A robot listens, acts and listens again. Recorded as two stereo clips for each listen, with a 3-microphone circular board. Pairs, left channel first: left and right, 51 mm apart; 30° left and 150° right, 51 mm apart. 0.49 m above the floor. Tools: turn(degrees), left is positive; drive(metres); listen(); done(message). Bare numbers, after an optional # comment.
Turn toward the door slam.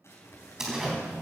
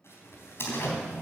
done("Found it: a door slam, straight ahead.")